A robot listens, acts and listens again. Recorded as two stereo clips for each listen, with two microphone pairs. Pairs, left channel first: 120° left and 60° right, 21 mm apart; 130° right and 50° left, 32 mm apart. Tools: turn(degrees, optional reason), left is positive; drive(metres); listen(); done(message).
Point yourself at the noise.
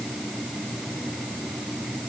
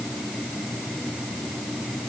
listen()
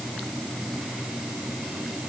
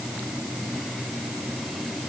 listen()
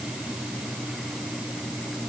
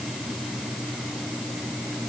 done("I can't make out anything.")